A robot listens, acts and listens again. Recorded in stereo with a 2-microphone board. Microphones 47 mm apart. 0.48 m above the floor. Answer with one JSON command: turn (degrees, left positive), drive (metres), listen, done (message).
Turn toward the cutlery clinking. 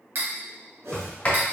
{"turn": -45}
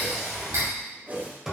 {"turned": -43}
{"turn": -90}
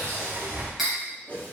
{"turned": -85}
{"done": "Facing the cutlery clinking, 1 to 2 m away."}